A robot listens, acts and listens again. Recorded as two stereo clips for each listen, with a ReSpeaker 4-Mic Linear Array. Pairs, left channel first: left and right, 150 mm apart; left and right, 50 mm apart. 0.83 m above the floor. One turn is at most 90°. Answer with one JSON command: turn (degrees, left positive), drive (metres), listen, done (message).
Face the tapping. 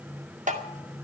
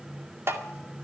{"turn": -60}
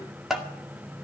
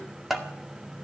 {"done": "Facing the tapping."}